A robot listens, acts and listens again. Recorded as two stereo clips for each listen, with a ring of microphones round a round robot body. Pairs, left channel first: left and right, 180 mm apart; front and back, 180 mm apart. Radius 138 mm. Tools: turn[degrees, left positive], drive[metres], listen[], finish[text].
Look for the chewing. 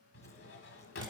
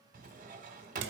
Action: listen[]
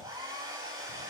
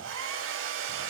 Action: listen[]
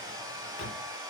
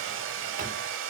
Action: finish[I can't make out chewing to turn to.]